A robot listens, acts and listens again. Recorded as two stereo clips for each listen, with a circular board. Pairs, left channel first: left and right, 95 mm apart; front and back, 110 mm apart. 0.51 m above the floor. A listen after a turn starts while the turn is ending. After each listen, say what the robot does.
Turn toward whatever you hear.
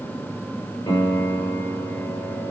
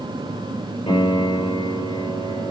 Turn 35° left.
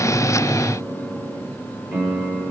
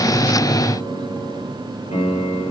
Turn 15° right.
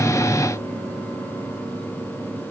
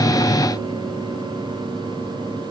Keep listening.
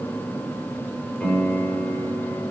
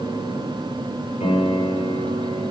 Found it: a piano, straight ahead.